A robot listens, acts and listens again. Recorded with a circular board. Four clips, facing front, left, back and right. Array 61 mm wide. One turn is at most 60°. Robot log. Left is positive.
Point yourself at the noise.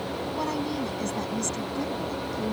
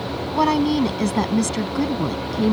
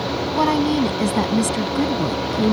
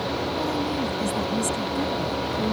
note: The woman speaking: 135° left.
cmd yaw +60
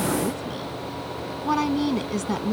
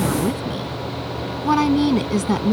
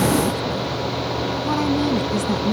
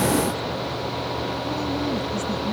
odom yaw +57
note: The woman speaking is now 85° left.
cmd yaw +60
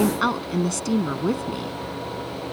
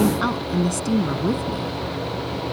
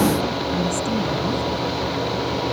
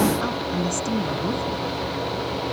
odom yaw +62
note: The woman speaking is now 25° left.
cmd yaw +25
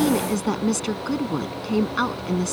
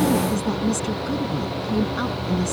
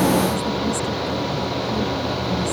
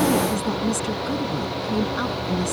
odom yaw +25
end: Facing the woman speaking.